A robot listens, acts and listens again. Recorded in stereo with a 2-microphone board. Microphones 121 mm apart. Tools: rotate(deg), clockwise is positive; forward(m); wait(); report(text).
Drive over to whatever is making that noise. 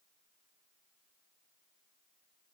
wait()
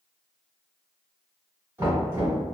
rotate(20)
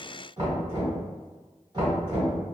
rotate(145)
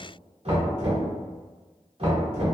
rotate(55)
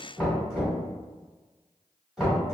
forward(1.0)
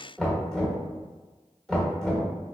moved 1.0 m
forward(1.0)
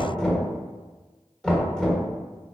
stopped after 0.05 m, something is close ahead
rotate(-10)
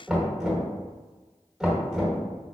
report("I am next to the knocking.")